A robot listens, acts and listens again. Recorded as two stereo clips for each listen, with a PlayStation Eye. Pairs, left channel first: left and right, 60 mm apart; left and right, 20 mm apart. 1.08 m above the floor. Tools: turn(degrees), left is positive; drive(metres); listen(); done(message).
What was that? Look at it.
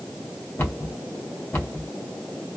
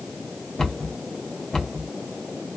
turn(degrees=40)
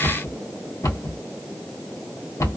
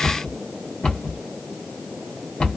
turn(degrees=100)
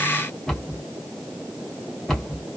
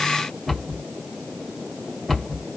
done("Found it: a cupboard door, straight ahead.")